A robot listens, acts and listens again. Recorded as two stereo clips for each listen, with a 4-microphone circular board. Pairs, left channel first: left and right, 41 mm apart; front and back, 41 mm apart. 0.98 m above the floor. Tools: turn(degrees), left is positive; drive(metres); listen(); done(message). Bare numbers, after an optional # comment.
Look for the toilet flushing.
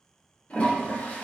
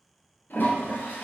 # The toilet flushing: 35° left.
turn(35)
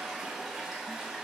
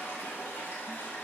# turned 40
done("Facing the toilet flushing, 2 to 4 m away.")